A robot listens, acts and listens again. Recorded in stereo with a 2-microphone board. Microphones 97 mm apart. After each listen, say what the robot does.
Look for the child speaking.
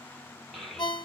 Turn 30° left.
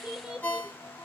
Turn 30° right.
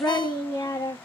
Turn 45° left.
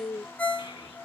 Turn 40° left.
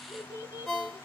Turn 50° left.
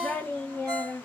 Turn 15° left.
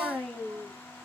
Found it: a child speaking, straight ahead, 1 to 2 m away.